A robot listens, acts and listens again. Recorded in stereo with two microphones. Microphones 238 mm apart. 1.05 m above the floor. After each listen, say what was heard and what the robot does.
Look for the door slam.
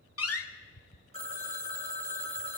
The door slam: about 75° left or 105° left. Turn 75° left.
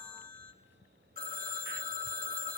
Keep listening.
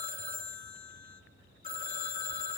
I heard a door slam, but can't make it out now. It was about straight ahead or 30° left.